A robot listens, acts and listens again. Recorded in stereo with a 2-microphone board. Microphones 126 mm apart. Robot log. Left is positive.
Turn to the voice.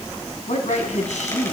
cmd yaw +90
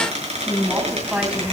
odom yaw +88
note: So it is at 10° right.
cmd yaw -10
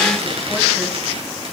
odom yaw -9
cmd idle
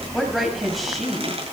end: Found it: a woman speaking, straight ahead, over 4 m away.